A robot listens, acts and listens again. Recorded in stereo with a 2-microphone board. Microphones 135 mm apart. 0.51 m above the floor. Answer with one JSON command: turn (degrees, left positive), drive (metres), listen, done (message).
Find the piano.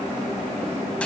{"listen": true}
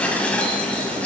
{"listen": true}
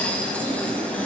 {"done": "I can't make out a piano, only dishes clattering."}